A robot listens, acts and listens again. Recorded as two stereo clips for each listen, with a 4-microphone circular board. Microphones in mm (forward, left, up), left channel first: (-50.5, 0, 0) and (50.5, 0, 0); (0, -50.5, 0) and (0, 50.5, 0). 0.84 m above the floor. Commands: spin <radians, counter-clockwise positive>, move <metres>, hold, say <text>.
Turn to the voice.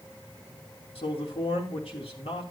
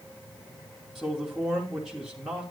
spin 3.05
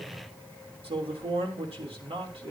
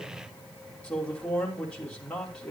spin -0.17
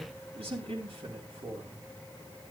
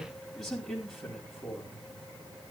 say Found it: a man speaking, straight ahead, 2 to 4 m away.